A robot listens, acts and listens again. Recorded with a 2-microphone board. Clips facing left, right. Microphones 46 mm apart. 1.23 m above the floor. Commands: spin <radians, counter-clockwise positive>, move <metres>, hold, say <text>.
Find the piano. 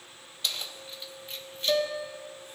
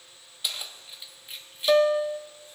spin -0.61
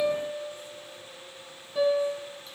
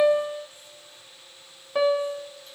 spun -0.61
spin -1.83
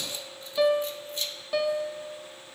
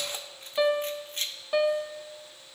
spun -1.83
spin -0.26
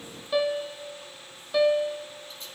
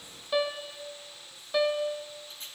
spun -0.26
say Facing the piano, under 1 m away.